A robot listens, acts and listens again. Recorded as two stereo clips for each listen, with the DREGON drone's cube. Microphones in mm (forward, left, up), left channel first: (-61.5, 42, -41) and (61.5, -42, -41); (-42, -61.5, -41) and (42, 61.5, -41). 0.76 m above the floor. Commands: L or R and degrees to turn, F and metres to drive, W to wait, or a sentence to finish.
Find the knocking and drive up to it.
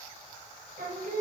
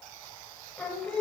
W
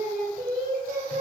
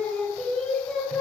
W
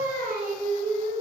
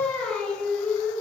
I can't make out knocking, only singing.